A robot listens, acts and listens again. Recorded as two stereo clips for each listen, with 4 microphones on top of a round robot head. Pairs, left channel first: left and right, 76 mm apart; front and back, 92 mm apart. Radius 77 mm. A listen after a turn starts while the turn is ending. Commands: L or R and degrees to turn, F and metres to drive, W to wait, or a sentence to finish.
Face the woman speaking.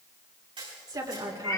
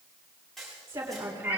R115
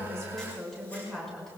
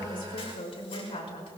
Found it: a woman speaking, straight ahead, 2 to 4 m away.